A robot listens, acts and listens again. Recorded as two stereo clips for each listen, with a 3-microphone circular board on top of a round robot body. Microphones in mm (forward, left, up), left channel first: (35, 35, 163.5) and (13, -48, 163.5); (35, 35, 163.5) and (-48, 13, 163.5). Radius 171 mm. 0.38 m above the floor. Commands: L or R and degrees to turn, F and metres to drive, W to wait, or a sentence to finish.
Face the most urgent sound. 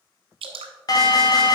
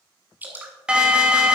L115
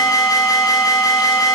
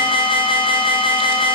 L30
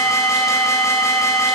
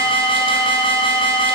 L20
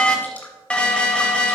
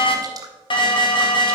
Facing the alarm, 1 to 2 m away.